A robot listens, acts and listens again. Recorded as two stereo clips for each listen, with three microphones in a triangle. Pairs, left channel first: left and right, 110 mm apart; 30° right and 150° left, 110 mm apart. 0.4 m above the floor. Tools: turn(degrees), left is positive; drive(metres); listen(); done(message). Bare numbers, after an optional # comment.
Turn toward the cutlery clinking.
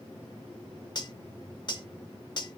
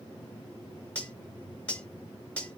# The cutlery clinking: 45° left.
turn(45)
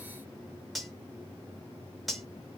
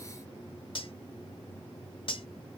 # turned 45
done("Facing the cutlery clinking.")